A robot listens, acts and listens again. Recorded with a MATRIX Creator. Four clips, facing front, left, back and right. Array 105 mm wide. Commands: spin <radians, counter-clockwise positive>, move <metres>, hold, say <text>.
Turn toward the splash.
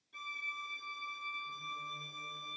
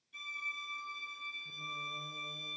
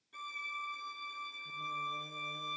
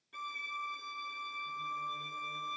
hold
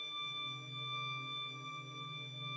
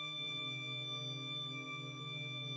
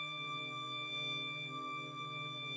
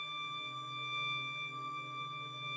hold
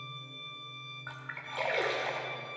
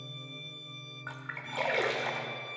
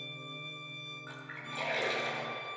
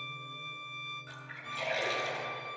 spin 1.13
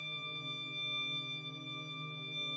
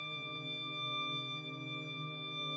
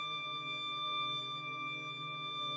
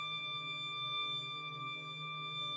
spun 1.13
say I heard a splash from this way, but can't make it out now.